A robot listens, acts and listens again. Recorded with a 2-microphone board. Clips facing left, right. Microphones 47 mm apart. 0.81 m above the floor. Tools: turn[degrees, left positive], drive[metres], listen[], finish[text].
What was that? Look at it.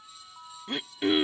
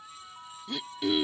Thought: The throat clearing: about 40° left or 140° left.
Action: turn[40]
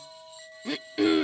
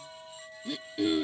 Thought: So it is at 100° left.
Action: turn[100]
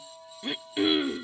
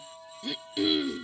Thought: The throat clearing is now 30° left.
Action: turn[30]
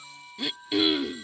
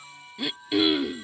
Action: finish[Facing the throat clearing.]